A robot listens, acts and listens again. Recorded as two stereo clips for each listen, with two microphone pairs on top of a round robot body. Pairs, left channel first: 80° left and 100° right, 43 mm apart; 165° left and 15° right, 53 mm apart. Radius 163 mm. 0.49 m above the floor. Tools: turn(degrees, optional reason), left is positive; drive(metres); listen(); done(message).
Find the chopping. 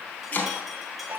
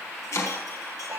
turn(degrees=135, reason="The chopping: 135° left.")
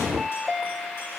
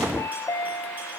listen()
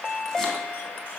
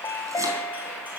listen()
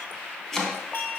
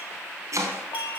done("Found it: chopping, straight ahead.")